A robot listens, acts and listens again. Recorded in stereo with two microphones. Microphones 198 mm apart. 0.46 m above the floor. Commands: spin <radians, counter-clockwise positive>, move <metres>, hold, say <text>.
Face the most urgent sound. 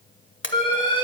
spin 0.44
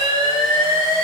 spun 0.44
say Facing the alarm.